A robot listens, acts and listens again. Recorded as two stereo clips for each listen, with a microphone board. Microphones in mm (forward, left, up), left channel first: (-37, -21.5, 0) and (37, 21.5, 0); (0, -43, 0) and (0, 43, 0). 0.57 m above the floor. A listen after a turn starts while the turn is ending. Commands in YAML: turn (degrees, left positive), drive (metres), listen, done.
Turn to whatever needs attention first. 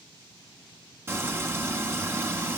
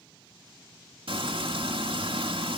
listen: true
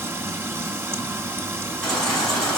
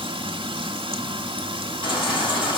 turn: -65
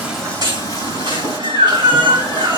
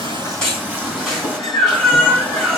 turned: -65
done: "Facing the baby crying, over 4 m away."